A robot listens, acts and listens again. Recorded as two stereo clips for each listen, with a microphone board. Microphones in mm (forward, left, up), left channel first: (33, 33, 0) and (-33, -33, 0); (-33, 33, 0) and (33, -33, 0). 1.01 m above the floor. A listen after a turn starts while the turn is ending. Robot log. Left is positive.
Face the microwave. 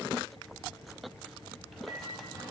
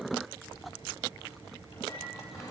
note: The microwave: 135° left.
cmd yaw +135
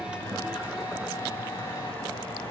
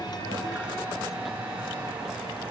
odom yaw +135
note: The microwave is now 35° left.
cmd yaw +35
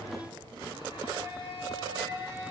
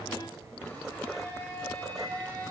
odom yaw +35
cmd idle
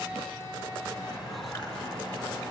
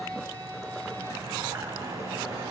note: The microwave is now 10° left.
cmd yaw +10
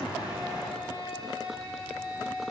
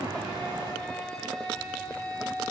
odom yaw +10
end: Found it: a microwave, straight ahead, over 4 m away.